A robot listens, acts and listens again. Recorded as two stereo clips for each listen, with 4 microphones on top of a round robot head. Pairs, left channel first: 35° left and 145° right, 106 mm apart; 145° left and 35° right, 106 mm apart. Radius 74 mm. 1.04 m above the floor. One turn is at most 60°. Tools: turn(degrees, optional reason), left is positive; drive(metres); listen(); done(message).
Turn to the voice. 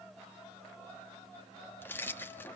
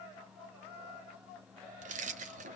listen()
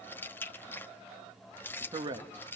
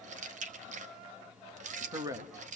turn(degrees=-60, reason="The man speaking: 95° right.")
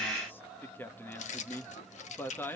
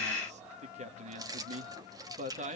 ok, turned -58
turn(degrees=-35, reason="The man speaking is now 35° right.")
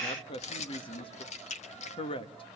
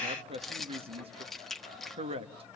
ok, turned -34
done("Facing the man speaking.")